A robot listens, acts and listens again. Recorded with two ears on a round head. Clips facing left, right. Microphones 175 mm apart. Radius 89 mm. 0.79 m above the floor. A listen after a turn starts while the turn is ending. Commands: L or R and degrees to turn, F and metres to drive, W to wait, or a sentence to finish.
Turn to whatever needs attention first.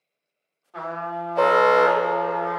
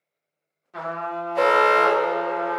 R60
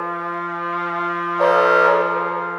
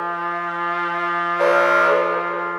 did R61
R50
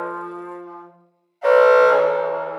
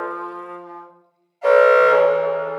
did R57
L10
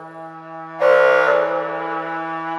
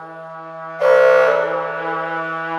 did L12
Found it: an alarm, straight ahead.